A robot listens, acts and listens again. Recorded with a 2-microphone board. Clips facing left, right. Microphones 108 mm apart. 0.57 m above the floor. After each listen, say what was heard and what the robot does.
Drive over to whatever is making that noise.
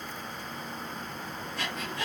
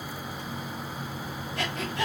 The breathing: about 65° right or 115° right. Turn 65° right.
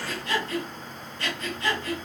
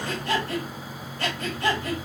So it is at 55° right. Turn 55° right.
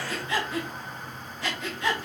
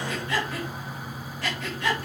Drive 1.0 m forward.
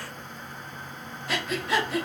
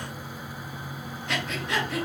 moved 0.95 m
Drive 1.0 m forward.
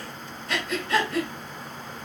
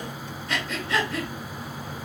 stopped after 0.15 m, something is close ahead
I am next to the breathing.